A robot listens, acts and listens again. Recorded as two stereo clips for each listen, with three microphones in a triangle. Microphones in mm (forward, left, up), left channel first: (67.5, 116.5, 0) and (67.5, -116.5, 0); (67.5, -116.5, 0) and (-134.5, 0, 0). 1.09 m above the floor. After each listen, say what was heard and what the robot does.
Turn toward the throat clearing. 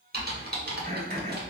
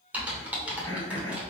The throat clearing: 40° right. Turn 40° right.
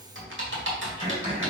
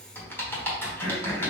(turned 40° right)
The throat clearing is now 20° right. Turn 20° right.
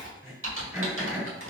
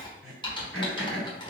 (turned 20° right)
The throat clearing is now 10° right. Turn 10° right.
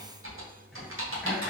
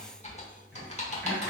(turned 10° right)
Keep listening.
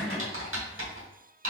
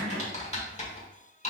Found it: throat clearing, straight ahead, 2 to 4 m away.